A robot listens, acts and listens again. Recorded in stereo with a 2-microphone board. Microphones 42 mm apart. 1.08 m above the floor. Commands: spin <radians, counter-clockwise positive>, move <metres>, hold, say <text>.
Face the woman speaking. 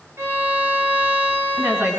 spin -1.13
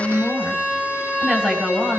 spin -0.26
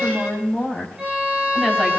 say Found it: a woman speaking, straight ahead, over 4 m away.